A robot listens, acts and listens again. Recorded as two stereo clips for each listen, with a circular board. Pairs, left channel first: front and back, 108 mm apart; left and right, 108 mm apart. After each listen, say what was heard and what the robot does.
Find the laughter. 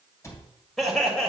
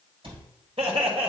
The laughter: 85° right. Turn 85° right.
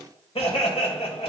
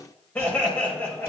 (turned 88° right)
The laughter is now 20° left. Turn 20° left.
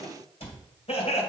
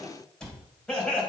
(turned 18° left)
The laughter is now 10° left. Turn 10° left.
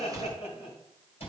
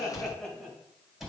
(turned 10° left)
Found it: laughter, straight ahead, 2 to 4 m away.